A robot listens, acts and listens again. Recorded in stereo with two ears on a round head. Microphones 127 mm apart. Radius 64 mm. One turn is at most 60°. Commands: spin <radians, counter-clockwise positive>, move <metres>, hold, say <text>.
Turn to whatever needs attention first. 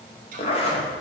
hold
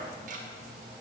hold
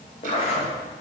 say I can't make out anything urgent, only ticking and a zipper.